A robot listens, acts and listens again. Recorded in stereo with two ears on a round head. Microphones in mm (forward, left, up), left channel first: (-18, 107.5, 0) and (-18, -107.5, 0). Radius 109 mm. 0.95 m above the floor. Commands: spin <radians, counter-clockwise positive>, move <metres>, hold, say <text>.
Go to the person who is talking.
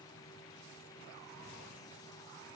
hold
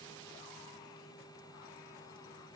hold
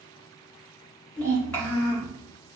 spin 0.52
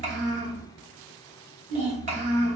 spin -0.52
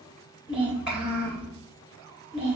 move 1.0
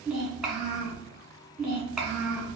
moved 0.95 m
move 1.0
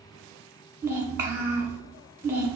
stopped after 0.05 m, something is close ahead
spin -0.17
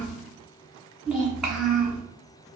say I am next to the child speaking.